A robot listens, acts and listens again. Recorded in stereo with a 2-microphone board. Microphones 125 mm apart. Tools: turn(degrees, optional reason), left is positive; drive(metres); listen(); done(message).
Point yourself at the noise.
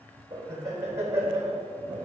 turn(degrees=-20, reason="The laughter: about 20° right or 160° right.")
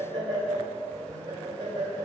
turn(degrees=-35, reason="The laughter: about 35° right or 145° right.")
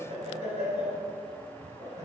turn(degrees=-115, reason="So it is at 115° right.")
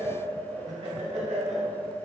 turn(degrees=-55, reason="The laughter is now 55° right.")
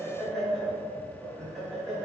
done("Found it: laughter, straight ahead.")